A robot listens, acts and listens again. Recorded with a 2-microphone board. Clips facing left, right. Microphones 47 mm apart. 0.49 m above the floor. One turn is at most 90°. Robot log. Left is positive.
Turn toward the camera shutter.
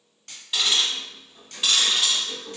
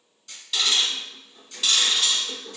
note: The camera shutter: about 65° left or 115° left.
cmd yaw +65
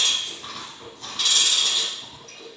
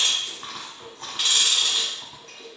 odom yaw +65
cmd idle
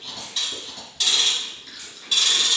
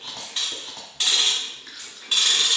cmd idle
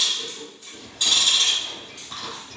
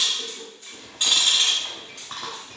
end: I heard a camera shutter, but can't make it out now. It was about straight ahead or 50° left.